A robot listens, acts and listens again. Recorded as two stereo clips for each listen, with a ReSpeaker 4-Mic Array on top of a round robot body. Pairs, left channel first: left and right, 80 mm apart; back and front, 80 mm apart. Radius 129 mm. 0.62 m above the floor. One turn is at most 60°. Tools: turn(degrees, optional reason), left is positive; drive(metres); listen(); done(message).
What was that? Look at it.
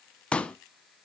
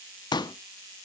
turn(degrees=60, reason="The pop: 165° left.")
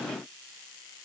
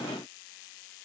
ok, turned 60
turn(degrees=60, reason="Nothing new. It was at 105° left.")
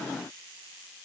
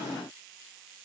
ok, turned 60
turn(degrees=45, reason="Nothing new. It was at 45° left.")
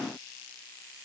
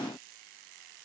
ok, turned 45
done("I heard a pop from this way, but can't make it out now.")